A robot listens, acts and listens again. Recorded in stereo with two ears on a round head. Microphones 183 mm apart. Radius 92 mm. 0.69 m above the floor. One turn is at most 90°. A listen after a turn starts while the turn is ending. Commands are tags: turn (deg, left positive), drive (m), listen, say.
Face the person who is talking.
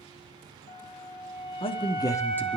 <turn deg="15"/>
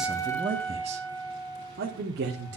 <turn deg="-55"/>
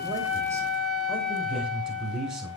<say>Found it: a man speaking, straight ahead.</say>